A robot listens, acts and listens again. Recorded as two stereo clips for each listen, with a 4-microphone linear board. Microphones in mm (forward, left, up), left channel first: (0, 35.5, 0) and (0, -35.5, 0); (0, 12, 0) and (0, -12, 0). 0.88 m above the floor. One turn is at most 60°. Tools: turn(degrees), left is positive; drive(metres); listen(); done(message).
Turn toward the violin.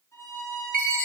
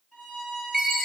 turn(degrees=45)
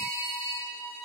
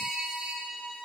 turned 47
turn(degrees=60)
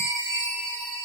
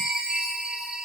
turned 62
turn(degrees=30)
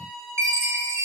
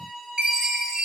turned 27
done("Found it: a violin, straight ahead.")